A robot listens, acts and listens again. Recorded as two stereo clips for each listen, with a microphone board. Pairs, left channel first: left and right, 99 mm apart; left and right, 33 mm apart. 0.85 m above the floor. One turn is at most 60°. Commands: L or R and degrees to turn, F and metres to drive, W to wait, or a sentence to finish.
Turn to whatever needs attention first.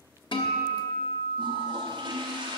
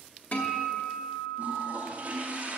W
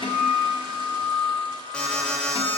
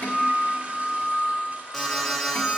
L30
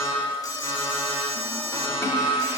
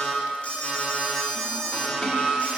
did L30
L60
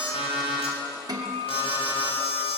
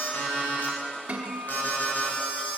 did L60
L60
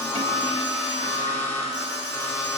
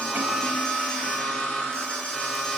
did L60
L25
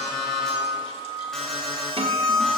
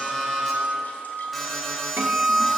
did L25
Found it: an alarm, straight ahead.